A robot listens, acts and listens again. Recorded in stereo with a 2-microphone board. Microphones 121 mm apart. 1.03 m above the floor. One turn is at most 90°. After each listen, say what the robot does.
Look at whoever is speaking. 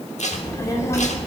Turn 20° left.
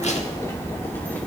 Turn 30° left.
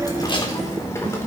Turn 20° left.
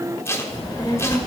Turn 30° left.
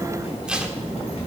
Turn 90° left.
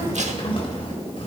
Turn 50° left.
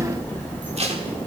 Turn 15° left.
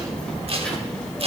Turn 10° left.
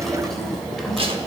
Facing the child speaking.